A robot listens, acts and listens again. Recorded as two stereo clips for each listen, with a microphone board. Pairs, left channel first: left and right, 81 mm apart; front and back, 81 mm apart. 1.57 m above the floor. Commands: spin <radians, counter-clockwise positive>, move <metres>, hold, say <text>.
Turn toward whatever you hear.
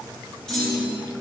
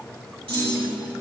spin 2.97
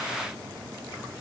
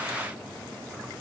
say Facing where the clunk came from. I can't hear it now.